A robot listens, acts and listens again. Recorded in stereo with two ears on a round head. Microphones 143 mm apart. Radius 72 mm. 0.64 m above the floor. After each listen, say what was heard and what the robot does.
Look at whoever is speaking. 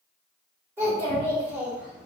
Turn 30° right.
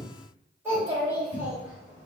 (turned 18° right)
Turn 30° right.
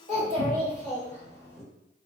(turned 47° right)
So it is at 130° right. Turn 130° right.
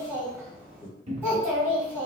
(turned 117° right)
The child speaking is now 15° right. Turn 15° right.
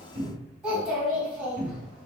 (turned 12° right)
Found it: a child speaking, straight ahead.